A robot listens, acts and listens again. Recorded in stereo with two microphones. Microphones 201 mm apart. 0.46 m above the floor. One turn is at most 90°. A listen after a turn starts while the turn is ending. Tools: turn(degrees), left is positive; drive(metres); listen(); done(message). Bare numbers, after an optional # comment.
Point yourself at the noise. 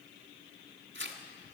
# The tearing paper: about 70° right or 110° right.
turn(-70)
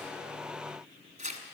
# So it is at 40° right.
turn(-40)
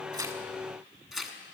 done("Facing the tearing paper, 1 to 2 m away.")